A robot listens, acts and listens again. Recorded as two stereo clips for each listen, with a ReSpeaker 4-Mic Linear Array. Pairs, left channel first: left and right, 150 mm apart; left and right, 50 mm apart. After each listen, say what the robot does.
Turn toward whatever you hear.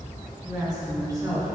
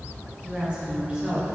Turn 20° right.
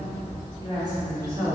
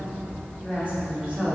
Turn 25° right.
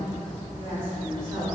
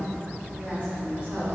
Turn 140° right.
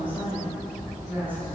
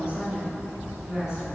Turn 10° right.
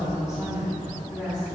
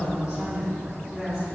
Facing the woman speaking, over 4 m away.